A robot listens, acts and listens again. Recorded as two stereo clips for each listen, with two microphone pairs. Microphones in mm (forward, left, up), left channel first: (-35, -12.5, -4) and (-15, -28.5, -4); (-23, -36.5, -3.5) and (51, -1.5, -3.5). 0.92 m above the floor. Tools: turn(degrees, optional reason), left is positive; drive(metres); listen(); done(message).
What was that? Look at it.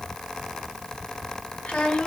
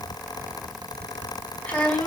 turn(degrees=130, reason="The child speaking: 130° left.")
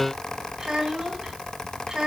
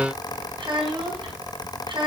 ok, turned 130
turn(degrees=25, reason="The child speaking is now 25° left.")
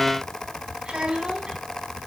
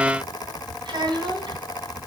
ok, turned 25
done("Facing the child speaking, over 4 m away.")